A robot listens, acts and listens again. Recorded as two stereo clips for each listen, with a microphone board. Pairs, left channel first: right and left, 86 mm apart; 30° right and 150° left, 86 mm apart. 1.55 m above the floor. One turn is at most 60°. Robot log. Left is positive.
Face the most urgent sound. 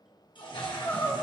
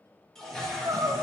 note: The crying: 160° right.
cmd yaw -60
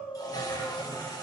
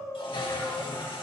note: The crying is now 90° right.
cmd yaw -60
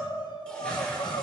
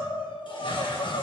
note: The crying is now 55° right.
cmd yaw -55
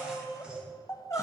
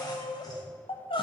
note: The crying is now 35° right.
cmd yaw -35
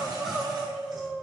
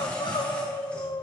end: Found it: crying, straight ahead, under 1 m away.